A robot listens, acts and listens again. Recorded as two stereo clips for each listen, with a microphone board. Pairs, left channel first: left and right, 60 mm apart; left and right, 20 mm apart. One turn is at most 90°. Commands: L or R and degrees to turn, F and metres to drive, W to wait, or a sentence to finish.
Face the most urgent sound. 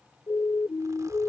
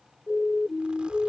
L55
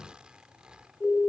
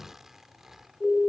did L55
L10
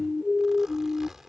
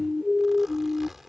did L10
Found it: a siren, straight ahead.